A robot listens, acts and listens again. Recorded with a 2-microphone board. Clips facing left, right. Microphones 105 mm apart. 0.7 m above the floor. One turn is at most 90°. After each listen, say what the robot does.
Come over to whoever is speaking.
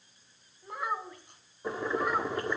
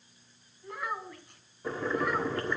Turn 30° left.
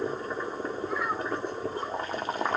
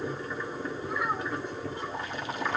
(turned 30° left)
Keep listening.
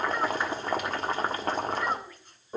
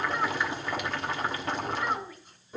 Drive 1.0 m forward.
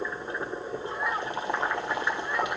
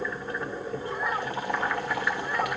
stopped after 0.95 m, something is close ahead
Keep listening.
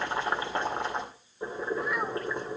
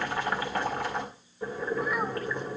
Keep listening.
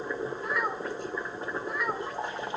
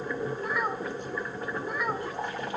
Facing where the child speaking came from. I can't hear it now. I did not reach it.